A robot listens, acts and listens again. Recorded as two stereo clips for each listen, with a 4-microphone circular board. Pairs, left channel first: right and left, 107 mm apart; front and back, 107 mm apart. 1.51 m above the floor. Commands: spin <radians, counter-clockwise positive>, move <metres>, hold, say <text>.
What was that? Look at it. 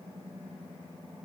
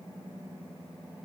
hold
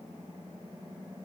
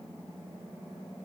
hold
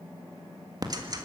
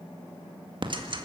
spin 2.44
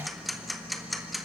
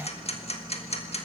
say Found it: ticking, straight ahead, 1 to 2 m away.